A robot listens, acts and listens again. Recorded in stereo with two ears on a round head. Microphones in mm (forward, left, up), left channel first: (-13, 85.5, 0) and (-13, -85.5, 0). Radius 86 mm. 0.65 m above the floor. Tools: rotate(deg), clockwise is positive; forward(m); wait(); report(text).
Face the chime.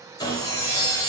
rotate(-55)
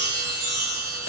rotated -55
report("Found it: a chime, straight ahead, 1 to 2 m away.")